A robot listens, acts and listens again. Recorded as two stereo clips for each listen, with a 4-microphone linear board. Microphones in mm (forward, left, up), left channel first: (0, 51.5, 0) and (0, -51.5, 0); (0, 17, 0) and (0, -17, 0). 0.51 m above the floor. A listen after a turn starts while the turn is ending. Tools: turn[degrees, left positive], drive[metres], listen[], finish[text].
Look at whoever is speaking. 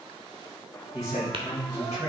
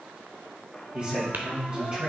Thought: The man speaking: about 30° right or 150° right.
Action: turn[-30]
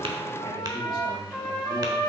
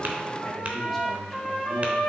Action: listen[]
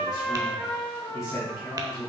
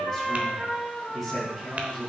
Action: finish[Found it: a man speaking, straight ahead.]